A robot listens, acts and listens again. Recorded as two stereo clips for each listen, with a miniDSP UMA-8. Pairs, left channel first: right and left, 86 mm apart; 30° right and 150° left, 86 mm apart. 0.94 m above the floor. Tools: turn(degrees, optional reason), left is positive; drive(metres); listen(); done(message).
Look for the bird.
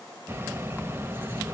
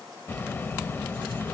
turn(degrees=30, reason="The bird: 30° left.")
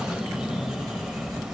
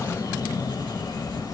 done("Found it: a bird, straight ahead, 1 to 2 m away.")